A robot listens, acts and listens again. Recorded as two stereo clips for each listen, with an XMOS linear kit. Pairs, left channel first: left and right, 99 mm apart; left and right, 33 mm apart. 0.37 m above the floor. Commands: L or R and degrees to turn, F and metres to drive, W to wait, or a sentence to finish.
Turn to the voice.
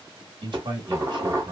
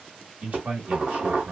R50
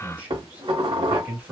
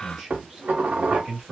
R20
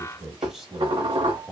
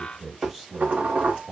Found it: a man speaking, straight ahead.